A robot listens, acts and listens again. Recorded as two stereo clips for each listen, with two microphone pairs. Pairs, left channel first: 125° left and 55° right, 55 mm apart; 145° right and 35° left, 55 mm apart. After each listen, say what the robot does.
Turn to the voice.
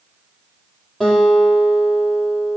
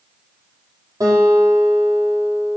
Keep listening.
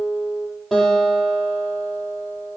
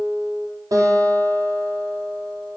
Keep listening.
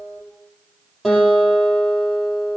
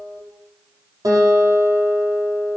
I can't make out anyone speaking, only a guitar.